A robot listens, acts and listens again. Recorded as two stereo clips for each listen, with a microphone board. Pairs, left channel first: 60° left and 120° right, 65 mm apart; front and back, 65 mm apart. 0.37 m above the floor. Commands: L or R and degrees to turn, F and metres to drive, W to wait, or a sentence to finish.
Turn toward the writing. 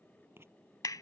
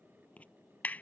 R70
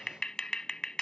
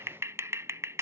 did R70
W
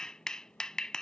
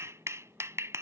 W
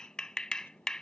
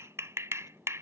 I heard writing from this way, but can't make it out now.